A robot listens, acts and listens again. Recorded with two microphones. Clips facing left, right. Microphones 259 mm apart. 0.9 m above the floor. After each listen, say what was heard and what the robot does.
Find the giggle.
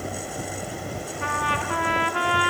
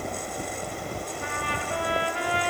Keep listening.
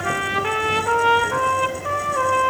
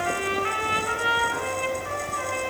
Keep listening.
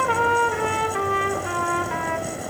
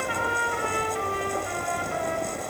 I can't make out a giggle, only a trumpet.